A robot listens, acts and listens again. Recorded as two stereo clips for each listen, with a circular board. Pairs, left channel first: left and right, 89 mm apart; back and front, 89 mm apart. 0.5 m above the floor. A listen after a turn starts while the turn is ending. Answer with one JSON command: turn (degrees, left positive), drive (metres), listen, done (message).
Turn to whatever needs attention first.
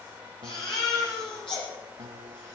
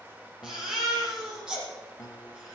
{"turn": 85}
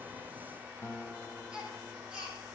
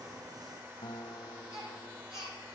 {"turn": -10}
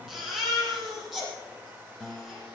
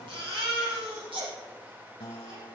{"done": "Found it: a baby crying, straight ahead, over 4 m away."}